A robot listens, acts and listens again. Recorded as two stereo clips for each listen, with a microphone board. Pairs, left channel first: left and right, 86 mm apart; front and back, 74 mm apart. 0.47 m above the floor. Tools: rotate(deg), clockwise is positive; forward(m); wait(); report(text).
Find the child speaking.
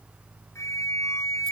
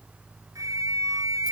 wait()
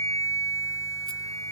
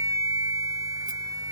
wait()
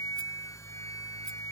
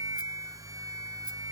report("I can't make out a child speaking, only a flute.")